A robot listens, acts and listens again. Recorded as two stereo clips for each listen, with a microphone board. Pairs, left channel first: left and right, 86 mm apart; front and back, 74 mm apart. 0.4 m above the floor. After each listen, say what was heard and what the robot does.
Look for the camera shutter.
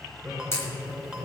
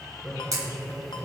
The camera shutter: 145° left. Turn 145° left.
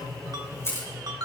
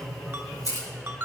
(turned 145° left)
The camera shutter is now 35° left. Turn 35° left.
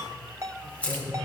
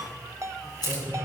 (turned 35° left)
The camera shutter is now 15° left. Turn 15° left.
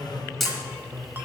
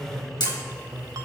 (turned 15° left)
Found it: a camera shutter, straight ahead.